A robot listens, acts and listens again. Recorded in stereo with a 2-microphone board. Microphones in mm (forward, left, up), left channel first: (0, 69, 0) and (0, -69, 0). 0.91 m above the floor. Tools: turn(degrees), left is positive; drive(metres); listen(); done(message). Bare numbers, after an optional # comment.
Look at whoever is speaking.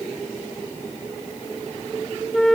listen()
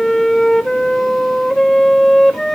listen()
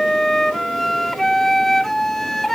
done("I can't make out anyone speaking, only a flute.")